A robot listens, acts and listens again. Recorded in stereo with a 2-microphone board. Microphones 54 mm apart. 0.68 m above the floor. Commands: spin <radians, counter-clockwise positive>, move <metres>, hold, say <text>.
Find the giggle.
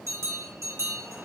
hold
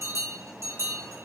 hold
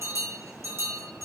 say I can't make out a giggle to turn to.